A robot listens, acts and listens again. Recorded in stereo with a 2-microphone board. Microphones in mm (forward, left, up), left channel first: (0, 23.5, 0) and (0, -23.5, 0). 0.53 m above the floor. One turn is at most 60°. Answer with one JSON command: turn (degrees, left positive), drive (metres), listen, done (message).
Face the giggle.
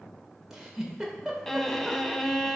{"turn": -30}
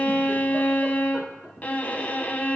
{"listen": true}
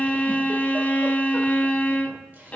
{"listen": true}
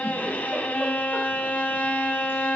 {"done": "I heard a giggle, but can't make it out now. It was about 20° left or 140° right."}